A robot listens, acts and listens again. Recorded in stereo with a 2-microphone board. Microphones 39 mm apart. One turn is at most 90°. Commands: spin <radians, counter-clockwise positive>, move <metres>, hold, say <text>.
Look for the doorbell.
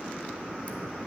hold
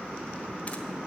hold
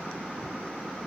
say I can't make out a doorbell.